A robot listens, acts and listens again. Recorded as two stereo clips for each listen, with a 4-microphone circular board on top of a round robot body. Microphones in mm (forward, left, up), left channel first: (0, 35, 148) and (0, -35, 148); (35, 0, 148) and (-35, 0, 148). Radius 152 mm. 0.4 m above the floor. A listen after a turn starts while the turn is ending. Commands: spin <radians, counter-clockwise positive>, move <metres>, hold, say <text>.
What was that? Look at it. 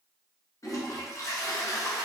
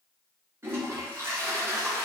spin 2.27
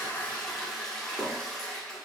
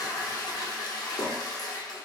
spin 0.17
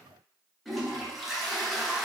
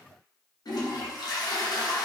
say Found it: a toilet flushing, straight ahead.